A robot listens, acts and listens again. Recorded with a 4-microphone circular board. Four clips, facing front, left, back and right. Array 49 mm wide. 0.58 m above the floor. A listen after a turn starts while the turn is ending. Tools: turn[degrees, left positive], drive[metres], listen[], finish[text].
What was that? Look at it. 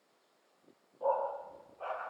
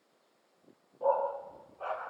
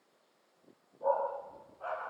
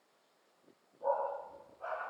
Thought: The dog barking: 50° left.
Action: turn[50]
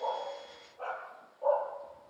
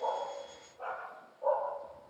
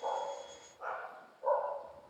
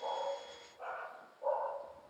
Action: finish[Found it: a dog barking, straight ahead.]